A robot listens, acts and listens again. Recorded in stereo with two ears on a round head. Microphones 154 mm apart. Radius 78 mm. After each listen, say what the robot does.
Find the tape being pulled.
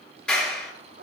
Keep listening.
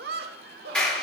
Keep listening.
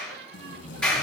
Turn 75° left.
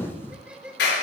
Turn 15° left.
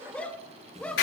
Keep listening.
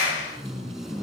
Found it: tape being pulled, straight ahead.